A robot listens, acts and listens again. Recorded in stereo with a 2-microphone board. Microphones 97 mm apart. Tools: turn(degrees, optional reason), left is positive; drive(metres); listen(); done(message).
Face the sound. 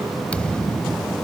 turn(degrees=30)
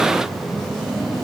listen()
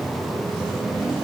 done("I heard a thud, but can't make it out now. It was about 15° right or 135° left.")